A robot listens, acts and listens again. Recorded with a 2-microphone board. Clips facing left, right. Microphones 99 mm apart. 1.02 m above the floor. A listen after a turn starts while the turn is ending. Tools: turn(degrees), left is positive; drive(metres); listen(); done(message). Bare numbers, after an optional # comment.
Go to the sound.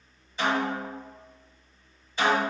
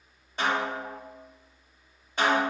# The snare drum: about 60° right or 120° right.
turn(-60)
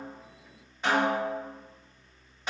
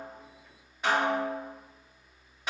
drive(1.0)
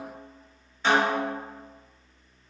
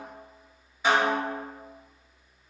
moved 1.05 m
# The snare drum is now 10° right.
turn(-10)
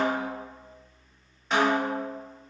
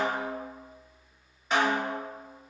drive(1.0)
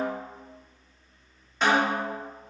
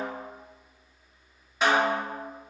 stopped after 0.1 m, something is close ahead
done("I am next to the snare drum.")